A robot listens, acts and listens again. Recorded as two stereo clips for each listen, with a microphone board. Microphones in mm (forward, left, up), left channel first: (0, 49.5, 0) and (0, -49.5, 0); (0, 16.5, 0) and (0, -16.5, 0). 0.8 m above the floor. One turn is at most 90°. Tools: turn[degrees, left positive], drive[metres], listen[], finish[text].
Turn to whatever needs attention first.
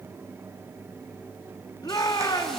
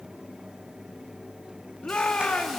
Thought: The shout: about 40° left or 140° left.
Action: turn[40]
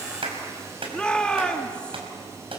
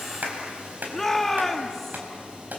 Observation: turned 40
Thought: So it is at 10° left.
Action: turn[10]
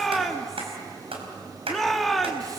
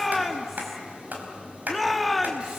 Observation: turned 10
Action: finish[Facing the shout, 1 to 2 m away.]